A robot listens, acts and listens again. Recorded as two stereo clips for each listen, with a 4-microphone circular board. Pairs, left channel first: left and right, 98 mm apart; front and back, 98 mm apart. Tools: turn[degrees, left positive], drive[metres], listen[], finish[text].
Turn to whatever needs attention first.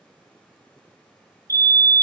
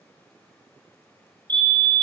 Thought: The fire alarm: 145° right.
Action: turn[-145]
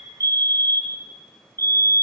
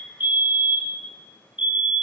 Thought: The fire alarm is now 30° left.
Action: turn[30]
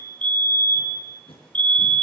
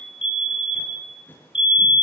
Thought: The fire alarm is now 15° left.
Action: turn[15]
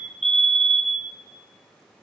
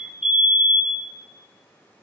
Action: finish[Found it: a fire alarm, straight ahead.]